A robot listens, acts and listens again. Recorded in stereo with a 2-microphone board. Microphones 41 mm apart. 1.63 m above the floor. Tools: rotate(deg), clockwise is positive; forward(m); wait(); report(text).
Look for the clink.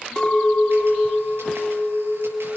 rotate(-30)
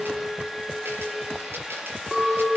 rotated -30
rotate(20)
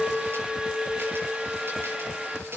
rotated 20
report("Found it: a clink, straight ahead, 2 to 4 m away.")